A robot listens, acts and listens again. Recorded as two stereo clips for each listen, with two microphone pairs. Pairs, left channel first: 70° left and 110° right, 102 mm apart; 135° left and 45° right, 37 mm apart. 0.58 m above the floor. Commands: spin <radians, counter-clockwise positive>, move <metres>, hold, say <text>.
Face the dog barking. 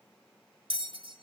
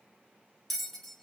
hold
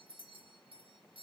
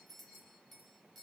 hold
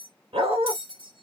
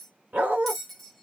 spin -1.48
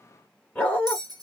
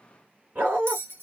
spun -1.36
say Found it: a dog barking, straight ahead.